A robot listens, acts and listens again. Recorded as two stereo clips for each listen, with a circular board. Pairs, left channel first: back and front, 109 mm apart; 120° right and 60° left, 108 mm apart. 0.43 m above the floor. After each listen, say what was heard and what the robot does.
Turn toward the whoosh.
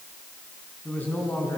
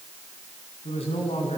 Keep listening.
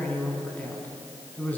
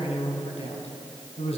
Keep listening.
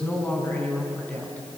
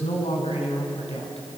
I can't make out a whoosh to turn to.